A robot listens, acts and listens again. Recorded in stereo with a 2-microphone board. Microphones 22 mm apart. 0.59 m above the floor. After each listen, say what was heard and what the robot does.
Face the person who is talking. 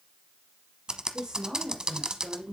The woman speaking: about 45° right or 135° right. Turn 45° right.
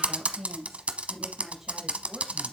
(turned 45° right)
So it is at 10° right. Turn 10° right.
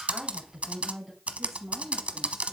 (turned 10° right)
Facing the woman speaking, over 4 m away.